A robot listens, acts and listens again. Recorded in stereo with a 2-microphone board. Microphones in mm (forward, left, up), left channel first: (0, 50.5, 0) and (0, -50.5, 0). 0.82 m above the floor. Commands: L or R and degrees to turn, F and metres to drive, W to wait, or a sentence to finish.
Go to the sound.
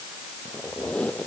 L30
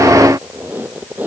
R20
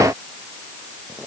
W
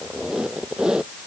F1.0
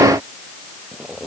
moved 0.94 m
F1.0
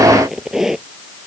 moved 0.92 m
F1.0
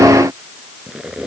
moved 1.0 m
R10
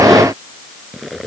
F1.0
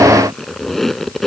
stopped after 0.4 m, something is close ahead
I am next to the squeak.